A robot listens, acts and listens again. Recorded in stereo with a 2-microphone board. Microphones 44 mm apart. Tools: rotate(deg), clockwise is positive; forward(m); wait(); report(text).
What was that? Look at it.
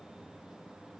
wait()
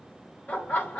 rotate(-40)
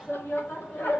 rotate(-50)
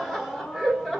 report("Found it: laughter, straight ahead, 1 to 2 m away.")